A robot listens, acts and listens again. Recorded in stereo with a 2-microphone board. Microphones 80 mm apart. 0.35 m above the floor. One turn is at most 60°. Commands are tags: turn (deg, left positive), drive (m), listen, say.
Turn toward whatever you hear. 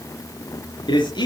<turn deg="60"/>
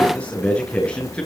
<turn deg="15"/>
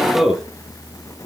<say>Found it: a man speaking, straight ahead, over 4 m away.</say>